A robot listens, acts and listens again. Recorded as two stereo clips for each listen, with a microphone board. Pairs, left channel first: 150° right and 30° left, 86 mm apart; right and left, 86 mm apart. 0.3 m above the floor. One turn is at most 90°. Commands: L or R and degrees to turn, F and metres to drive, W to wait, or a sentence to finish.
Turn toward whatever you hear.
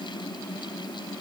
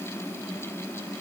W
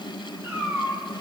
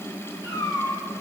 R35
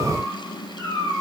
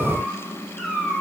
Facing the cat meowing, 2 to 4 m away.